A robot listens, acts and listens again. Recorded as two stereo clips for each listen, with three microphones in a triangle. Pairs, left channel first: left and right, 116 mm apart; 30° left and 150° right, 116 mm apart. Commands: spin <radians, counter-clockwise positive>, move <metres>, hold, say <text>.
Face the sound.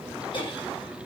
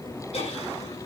spin 0.87
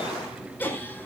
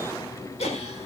spin 0.26
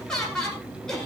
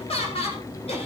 say Facing the laughter.